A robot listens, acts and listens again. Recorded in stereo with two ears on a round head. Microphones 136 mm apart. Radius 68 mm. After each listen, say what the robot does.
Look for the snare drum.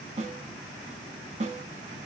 Turn 50° right.
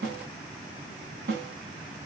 Turn 80° right.
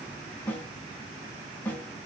Turn 15° left.
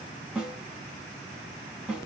Facing the snare drum.